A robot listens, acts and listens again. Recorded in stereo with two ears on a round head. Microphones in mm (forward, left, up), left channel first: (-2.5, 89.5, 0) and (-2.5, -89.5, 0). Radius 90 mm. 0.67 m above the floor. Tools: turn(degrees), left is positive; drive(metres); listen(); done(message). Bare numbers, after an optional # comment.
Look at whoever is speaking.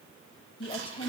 # The woman speaking: about 25° left or 155° left.
turn(25)
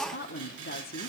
# So it is at 120° left.
turn(120)
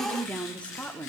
# The woman speaking is now 10° left.
turn(10)
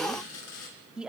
done("Found it: a woman speaking, straight ahead, 1 to 2 m away.")